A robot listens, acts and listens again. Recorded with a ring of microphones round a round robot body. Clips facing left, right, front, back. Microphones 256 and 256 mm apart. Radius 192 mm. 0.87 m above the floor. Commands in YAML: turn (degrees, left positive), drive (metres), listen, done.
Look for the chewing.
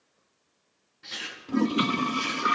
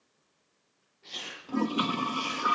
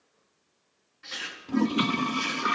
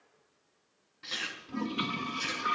turn: 140
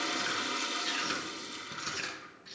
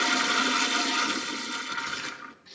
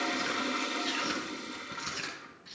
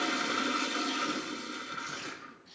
turn: 10
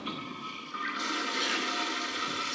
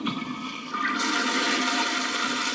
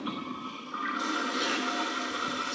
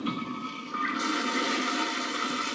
listen: true
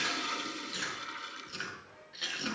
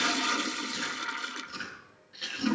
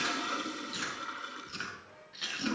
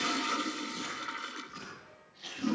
done: "Facing the chewing, over 4 m away."